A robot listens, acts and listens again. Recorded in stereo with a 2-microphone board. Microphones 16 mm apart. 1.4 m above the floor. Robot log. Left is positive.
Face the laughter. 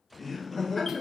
note: The laughter: about 20° left or 160° left.
cmd yaw +20
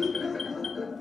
end: Facing the laughter, 1 to 2 m away.